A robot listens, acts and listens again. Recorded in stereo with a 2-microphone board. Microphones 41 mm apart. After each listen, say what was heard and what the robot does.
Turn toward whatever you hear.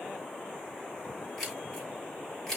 Turn 30° left.
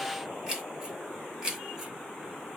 So it is at 15° right. Turn 15° right.
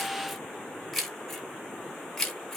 The keys jangling is now 10° left. Turn 10° left.
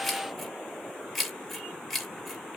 Facing the keys jangling, 1 to 2 m away.